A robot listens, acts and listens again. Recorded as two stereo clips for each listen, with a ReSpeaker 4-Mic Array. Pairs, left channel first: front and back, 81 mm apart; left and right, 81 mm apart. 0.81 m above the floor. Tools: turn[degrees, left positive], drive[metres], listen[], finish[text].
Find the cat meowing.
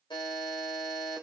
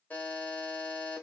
Action: listen[]
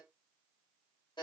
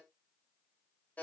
Action: listen[]
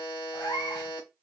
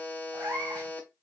Thought: The cat meowing: 30° right.
Action: turn[-30]
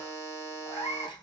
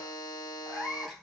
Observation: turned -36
Action: finish[Facing the cat meowing.]